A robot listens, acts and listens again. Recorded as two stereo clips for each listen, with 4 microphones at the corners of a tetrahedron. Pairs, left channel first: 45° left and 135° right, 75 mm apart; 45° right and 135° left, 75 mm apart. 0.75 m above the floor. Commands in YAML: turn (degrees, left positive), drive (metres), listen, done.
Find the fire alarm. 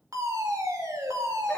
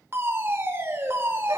turn: -175
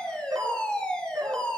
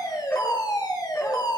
turn: -35
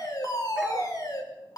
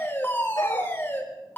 turn: 15
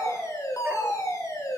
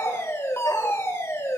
done: "Facing the fire alarm."